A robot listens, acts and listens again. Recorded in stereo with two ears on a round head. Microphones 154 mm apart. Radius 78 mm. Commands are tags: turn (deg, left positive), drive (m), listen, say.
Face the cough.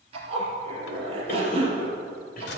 <turn deg="50"/>
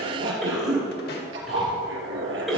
<say>Found it: a cough, straight ahead, 2 to 4 m away.</say>